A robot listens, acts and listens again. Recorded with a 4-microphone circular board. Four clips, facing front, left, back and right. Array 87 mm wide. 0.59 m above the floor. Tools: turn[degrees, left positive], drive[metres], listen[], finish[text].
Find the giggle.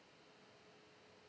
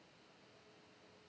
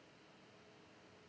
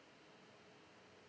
Action: listen[]
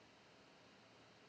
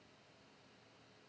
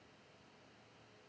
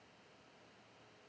Action: listen[]
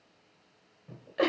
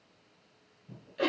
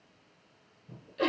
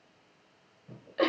Thought: The giggle: 30° right.
Action: turn[-30]
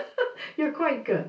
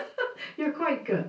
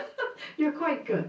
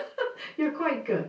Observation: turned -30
Action: finish[Facing the giggle.]